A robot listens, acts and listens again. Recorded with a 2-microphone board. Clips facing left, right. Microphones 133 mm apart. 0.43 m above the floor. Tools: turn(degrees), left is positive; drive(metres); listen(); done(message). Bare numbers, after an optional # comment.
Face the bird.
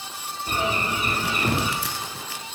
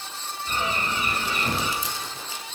# The bird: about 50° left or 130° left.
turn(50)
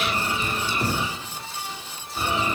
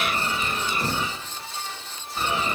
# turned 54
done("Found it: a bird, straight ahead, over 4 m away.")